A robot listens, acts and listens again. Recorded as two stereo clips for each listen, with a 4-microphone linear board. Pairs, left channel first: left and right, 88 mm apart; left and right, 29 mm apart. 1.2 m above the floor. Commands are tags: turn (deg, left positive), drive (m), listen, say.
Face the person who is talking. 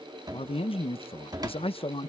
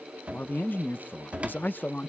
<turn deg="90"/>
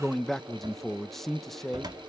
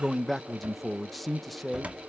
<say>Facing the man speaking, 1 to 2 m away.</say>